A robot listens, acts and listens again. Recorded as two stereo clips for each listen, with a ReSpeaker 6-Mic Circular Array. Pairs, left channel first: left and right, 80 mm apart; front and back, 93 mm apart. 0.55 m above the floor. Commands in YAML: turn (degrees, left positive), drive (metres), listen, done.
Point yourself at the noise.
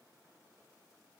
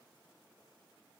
listen: true
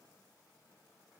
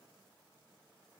listen: true
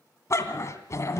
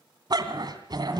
turn: 140
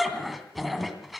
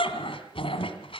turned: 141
done: "Facing the dog barking."